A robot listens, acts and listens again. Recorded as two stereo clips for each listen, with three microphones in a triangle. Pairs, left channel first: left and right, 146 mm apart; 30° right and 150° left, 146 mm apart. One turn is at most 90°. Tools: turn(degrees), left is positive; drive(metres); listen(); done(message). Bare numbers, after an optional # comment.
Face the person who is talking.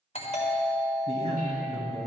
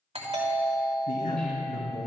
# The man speaking: 55° right.
turn(-55)
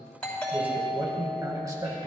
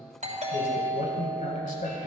# The man speaking is now 35° right.
turn(-35)
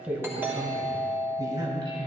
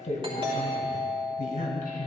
# The man speaking is now 40° right.
turn(-40)
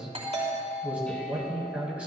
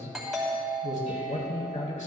# The man speaking is now 10° right.
turn(-10)
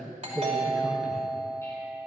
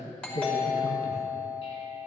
done("Found it: a man speaking, straight ahead, 2 to 4 m away.")